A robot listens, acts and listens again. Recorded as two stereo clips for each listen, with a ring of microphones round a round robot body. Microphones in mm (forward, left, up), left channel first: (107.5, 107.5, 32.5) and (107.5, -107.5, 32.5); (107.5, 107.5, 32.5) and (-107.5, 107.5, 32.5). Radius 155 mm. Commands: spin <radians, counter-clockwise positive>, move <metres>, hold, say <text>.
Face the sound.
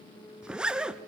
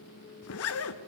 say Facing the zipper.